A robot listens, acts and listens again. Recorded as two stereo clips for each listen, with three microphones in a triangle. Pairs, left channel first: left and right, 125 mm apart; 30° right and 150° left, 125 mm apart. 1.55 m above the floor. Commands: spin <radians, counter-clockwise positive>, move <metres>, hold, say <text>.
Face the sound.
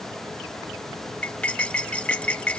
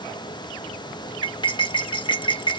spin 0.17
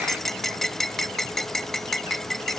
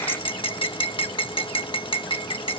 say Facing the cutlery clinking.